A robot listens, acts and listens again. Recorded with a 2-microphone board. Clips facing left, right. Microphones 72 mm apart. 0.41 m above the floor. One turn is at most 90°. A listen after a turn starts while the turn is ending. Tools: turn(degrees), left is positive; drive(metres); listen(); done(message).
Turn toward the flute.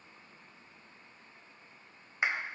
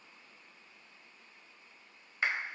listen()
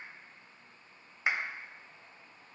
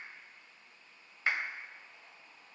listen()
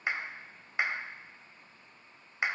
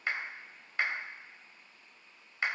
done("I can't make out a flute to turn to.")